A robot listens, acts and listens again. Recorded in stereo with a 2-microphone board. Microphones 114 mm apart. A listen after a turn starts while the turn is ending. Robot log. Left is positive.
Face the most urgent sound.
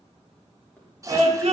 note: The scream: about 75° right or 105° right.
cmd yaw -75
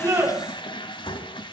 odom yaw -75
cmd idle
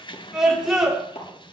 end: Facing the scream, over 4 m away.